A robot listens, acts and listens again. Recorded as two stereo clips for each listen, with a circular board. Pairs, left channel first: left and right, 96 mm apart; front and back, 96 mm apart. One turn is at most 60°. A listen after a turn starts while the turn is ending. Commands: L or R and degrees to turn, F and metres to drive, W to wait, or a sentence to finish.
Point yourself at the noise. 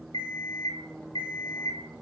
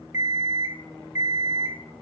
L60
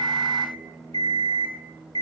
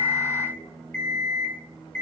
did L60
L60
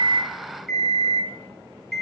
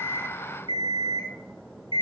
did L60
Facing the alarm clock, under 1 m away.